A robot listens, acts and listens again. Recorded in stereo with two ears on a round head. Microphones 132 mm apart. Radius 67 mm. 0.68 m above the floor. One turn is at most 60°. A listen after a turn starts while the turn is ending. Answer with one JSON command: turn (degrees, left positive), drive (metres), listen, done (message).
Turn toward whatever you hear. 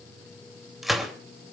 {"turn": 30}
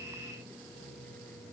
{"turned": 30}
{"listen": true}
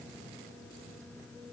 {"done": "I heard a gunshot, but can't make it out now. It was about 30° right or 150° left."}